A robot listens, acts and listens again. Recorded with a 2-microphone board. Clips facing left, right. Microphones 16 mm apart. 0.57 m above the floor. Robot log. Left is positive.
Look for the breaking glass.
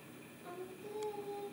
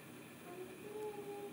cmd idle
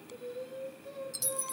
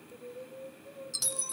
note: The breaking glass: about 40° right or 140° right.
cmd yaw -40
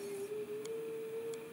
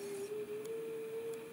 cmd idle
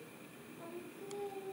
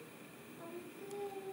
end: I heard breaking glass, but can't make it out now. It was about straight ahead or 100° right.